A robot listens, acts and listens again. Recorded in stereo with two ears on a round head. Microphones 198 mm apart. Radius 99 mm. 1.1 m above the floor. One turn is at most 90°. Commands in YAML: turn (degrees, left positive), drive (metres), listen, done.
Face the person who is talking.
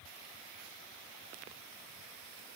listen: true
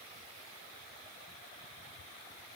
listen: true
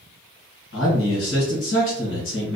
turn: 60
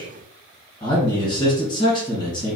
turn: 25
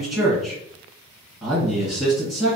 done: "Facing the man speaking, 1 to 2 m away."